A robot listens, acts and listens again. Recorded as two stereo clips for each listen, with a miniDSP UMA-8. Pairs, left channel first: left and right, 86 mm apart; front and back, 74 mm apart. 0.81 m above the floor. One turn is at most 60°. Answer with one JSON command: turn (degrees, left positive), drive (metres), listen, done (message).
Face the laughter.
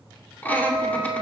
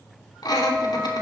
{"turn": 20}
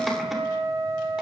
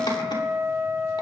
{"listen": true}
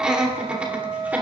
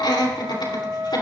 {"turn": -15}
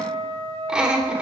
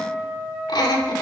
{"turn": -10}
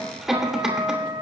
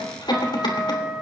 {"done": "Facing the laughter, 2 to 4 m away."}